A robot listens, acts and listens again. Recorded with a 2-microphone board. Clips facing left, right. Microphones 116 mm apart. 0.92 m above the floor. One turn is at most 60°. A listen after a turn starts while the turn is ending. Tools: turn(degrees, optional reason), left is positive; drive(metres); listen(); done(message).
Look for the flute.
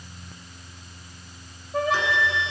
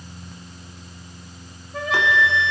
turn(degrees=40, reason="The flute: about 40° left or 140° left.")
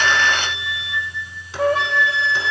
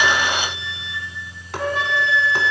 turn(degrees=60, reason="So it is at 100° left.")
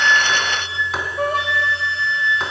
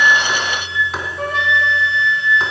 turn(degrees=35, reason="The flute is now 35° left.")
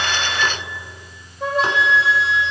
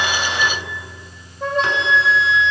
done("Found it: a flute, straight ahead.")